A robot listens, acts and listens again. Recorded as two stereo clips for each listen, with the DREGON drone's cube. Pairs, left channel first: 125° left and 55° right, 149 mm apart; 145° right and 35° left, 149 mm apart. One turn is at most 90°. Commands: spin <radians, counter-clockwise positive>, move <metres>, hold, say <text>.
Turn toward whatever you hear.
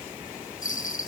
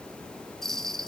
spin 1.57
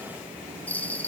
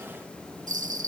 spin 0.79
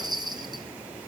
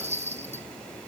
say Facing the bell.